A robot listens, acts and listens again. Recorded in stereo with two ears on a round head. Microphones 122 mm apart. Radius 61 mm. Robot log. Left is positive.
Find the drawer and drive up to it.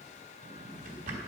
note: The drawer: about 55° right or 125° right.
cmd yaw -55
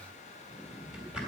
cmd fwd 1.0
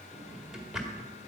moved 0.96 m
cmd fwd 1.0
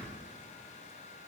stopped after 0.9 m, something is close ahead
end: I am next to the drawer.